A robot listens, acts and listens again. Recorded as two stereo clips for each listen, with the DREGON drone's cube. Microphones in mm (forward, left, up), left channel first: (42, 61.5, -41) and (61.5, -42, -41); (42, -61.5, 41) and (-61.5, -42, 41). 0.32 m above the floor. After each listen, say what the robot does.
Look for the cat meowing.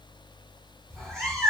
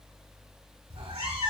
Turn 175° right.
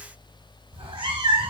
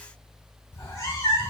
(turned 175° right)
Turn 65° right.
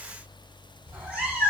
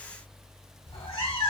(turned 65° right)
Facing the cat meowing, 1 to 2 m away.